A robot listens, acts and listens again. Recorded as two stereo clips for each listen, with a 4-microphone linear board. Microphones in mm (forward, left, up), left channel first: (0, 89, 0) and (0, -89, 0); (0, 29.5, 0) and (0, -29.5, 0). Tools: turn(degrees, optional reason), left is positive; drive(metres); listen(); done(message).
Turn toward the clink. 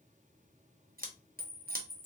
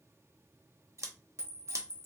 turn(degrees=-55, reason="The clink: about 55° right or 125° right.")
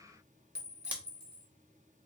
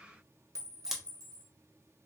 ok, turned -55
turn(degrees=-70, reason="So it is at 70° right.")
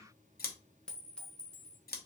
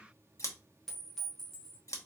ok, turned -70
done("Facing the clink, 1 to 2 m away.")